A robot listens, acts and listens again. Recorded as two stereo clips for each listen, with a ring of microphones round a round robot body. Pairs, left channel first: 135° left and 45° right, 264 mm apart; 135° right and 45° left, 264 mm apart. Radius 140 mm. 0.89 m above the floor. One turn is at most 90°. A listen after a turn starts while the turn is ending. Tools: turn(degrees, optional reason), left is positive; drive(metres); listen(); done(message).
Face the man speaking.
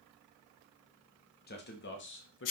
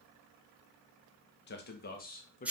turn(degrees=90, reason="The man speaking: 170° left.")
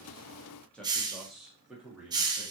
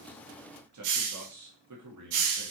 turn(degrees=40, reason="The man speaking is now 40° left.")
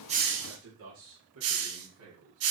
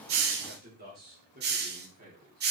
turn(degrees=-10, reason="The man speaking is now 10° right.")
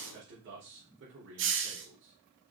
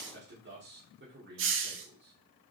done("Found it: a man speaking, straight ahead.")